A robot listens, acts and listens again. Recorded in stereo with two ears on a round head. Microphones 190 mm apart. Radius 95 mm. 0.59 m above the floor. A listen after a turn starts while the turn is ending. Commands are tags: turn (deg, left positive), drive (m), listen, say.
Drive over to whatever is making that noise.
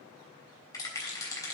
<turn deg="20"/>
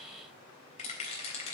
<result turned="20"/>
<turn deg="145"/>
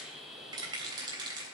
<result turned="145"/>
<turn deg="-25"/>
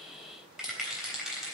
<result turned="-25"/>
<drive m="1.0"/>
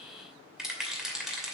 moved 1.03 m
<drive m="1.0"/>
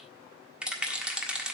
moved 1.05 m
<drive m="1.0"/>
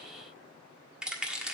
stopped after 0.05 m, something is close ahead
<say>I am next to the rattle.</say>